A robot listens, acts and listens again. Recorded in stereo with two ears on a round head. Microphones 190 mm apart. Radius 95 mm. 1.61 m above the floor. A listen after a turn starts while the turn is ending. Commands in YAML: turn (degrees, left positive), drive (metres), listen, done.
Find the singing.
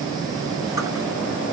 listen: true
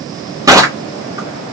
listen: true
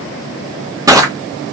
done: "I can't make out singing, only crushing."